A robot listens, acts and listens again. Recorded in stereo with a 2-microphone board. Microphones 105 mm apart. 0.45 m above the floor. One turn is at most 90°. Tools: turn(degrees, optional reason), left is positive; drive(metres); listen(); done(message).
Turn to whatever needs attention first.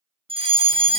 turn(degrees=-60, reason="The fire alarm: about 60° right or 120° right.")
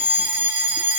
turn(degrees=-15, reason="So it is at 15° right.")
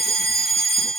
done("Found it: a fire alarm, straight ahead, 2 to 4 m away.")